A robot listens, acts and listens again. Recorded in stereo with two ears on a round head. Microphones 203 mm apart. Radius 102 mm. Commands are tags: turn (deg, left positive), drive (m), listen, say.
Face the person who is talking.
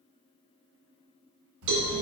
<turn deg="-70"/>
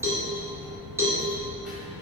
<say>Facing the child speaking.</say>